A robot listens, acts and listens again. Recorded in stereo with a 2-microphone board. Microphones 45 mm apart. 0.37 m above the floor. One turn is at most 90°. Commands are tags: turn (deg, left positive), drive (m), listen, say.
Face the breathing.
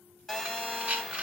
<turn deg="-30"/>
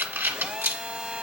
<turn deg="-90"/>
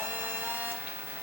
<turn deg="-25"/>
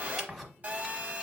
<say>Facing the breathing.</say>